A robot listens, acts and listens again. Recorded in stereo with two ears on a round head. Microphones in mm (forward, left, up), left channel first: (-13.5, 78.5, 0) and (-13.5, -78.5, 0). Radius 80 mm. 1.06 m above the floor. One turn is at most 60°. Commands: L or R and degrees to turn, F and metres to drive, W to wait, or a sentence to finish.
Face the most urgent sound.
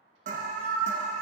R45
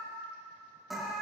Found it: an alarm, straight ahead.